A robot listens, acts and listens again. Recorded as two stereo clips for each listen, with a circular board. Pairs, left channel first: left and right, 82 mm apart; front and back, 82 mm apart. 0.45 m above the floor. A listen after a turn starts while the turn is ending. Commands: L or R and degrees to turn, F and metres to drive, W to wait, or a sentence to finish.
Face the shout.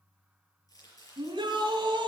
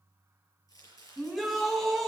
R90
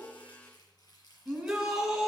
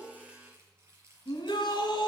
R10
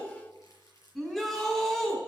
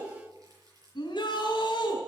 Found it: a shout, straight ahead, over 4 m away.